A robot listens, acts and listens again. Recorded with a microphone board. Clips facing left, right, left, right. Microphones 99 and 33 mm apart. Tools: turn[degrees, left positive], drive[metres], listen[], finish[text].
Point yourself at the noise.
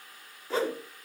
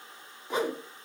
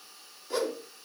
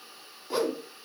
Thought: The whoosh: about 20° right or 160° right.
Action: turn[-20]
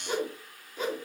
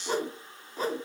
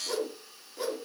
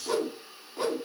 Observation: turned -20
Thought: So it is at 140° right.
Action: turn[-140]
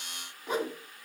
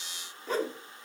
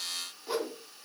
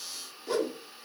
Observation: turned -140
Thought: The whoosh is now 15° left.
Action: turn[15]
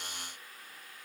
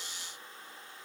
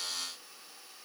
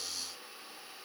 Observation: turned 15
Action: listen[]
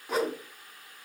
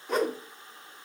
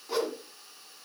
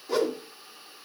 Action: finish[Found it: a whoosh, straight ahead.]